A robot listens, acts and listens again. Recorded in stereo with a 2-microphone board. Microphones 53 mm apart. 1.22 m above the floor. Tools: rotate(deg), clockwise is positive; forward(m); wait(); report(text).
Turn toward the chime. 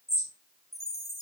rotate(-65)
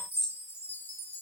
rotate(-50)
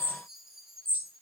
report("Facing the chime, 1 to 2 m away.")